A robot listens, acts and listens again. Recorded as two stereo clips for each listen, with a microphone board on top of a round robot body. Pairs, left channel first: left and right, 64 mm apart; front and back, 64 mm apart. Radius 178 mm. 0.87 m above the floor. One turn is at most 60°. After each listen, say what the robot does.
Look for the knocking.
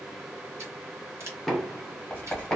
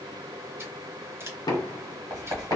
Facing the knocking, under 1 m away.